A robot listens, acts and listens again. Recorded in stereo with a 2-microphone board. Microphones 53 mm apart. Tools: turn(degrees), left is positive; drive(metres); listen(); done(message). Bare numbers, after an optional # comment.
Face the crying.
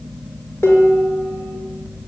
listen()
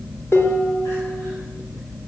listen()
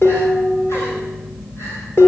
done("I can't make out crying, only dishes clattering.")